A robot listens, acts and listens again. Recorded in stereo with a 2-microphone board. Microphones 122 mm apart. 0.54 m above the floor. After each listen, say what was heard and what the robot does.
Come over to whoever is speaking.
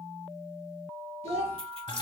The child speaking: about 65° right or 115° right. Turn 65° right.
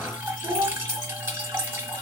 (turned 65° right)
So it is at 45° right. Turn 45° right.
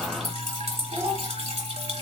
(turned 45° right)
Keep listening.
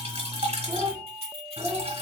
Drive 1.0 m forward.
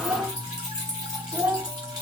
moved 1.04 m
The child speaking is now 15° right. Turn 15° right.
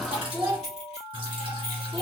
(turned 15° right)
Drive 1.0 m forward.
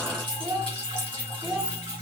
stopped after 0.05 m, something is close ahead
The child speaking is now 10° right. Turn 10° right.
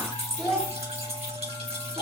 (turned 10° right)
I am next to the child speaking.